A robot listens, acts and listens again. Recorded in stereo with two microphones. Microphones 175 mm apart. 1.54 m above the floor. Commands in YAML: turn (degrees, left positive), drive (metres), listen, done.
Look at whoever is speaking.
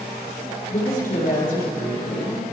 turn: 60
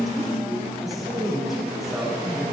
done: "Facing the woman speaking, over 4 m away."